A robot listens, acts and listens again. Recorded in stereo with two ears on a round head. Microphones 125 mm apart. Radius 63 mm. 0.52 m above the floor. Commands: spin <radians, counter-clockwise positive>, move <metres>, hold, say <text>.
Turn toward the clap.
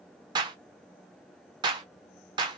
spin -0.61
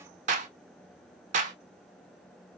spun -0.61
spin -1.83
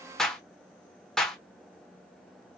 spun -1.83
say Facing the clap.